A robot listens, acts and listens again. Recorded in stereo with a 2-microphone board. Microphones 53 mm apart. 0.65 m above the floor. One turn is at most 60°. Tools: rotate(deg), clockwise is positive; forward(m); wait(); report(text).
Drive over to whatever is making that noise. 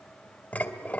rotate(-35)
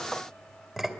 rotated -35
forward(1.0)
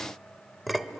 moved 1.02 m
forward(1.0)
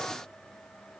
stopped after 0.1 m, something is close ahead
wait()
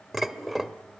report("I am next to the dishes clattering.")